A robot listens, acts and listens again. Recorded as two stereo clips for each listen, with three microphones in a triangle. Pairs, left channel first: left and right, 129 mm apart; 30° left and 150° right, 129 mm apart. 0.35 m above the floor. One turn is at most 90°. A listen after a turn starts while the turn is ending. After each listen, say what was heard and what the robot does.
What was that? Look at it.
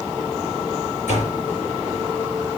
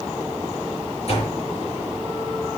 The door slam: 70° left. Turn 70° left.
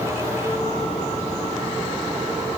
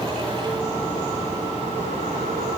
I heard a door slam from this way, but can't make it out now.